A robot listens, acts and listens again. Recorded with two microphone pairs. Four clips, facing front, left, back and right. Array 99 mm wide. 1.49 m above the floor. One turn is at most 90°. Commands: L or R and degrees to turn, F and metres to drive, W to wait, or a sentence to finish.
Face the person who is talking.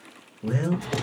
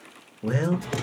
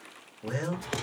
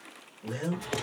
L90
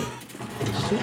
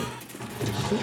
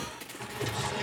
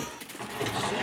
L15
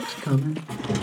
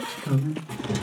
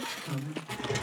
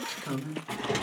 Found it: a man speaking, straight ahead, under 1 m away.